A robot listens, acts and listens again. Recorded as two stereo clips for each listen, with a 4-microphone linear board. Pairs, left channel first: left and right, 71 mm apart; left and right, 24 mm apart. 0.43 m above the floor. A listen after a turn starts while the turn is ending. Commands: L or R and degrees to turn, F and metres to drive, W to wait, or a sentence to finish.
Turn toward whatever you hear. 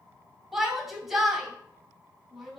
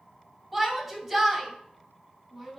R30
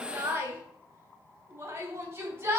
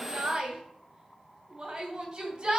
R145
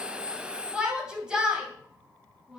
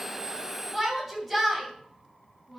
R10
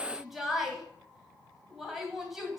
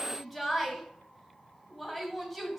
Facing the shout, 2 to 4 m away.